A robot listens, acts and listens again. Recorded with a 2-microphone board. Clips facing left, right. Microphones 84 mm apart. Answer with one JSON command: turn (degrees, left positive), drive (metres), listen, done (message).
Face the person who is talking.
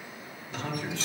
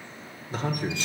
{"turn": -40}
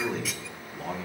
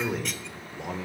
{"turn": -10}
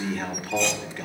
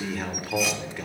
{"done": "Found it: a man speaking, straight ahead, 1 to 2 m away."}